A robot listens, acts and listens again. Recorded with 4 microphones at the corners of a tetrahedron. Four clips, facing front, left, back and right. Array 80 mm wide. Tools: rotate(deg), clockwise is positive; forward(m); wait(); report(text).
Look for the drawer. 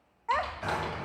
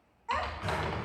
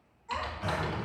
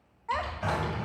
rotate(60)
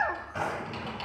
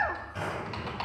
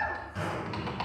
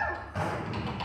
rotate(20)
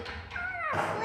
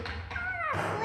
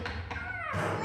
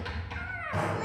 report("Found it: a drawer, straight ahead, 2 to 4 m away.")